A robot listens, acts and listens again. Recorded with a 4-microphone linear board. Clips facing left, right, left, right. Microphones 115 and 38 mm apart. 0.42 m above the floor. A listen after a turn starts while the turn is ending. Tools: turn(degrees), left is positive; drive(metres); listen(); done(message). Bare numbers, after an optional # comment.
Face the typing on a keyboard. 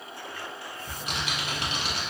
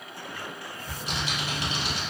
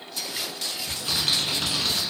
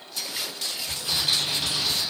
# The typing on a keyboard: about 60° left or 120° left.
turn(60)
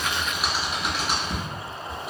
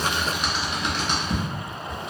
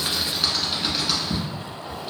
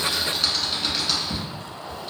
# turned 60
done("Found it: typing on a keyboard, straight ahead.")